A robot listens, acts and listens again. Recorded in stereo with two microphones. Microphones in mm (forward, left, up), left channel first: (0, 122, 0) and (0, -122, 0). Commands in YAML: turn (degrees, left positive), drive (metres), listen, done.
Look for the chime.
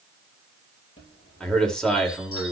turn: 70
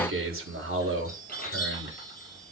turn: 40
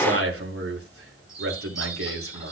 turn: 15
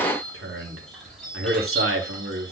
done: "Found it: a chime, straight ahead, over 4 m away."